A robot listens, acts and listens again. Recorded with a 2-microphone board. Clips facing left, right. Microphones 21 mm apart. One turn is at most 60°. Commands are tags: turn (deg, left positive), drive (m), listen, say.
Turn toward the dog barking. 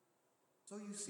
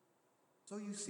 <listen/>
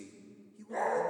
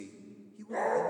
<turn deg="-30"/>
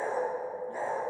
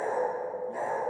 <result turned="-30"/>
<turn deg="15"/>
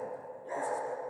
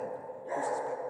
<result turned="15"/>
<say>Facing the dog barking, over 4 m away.</say>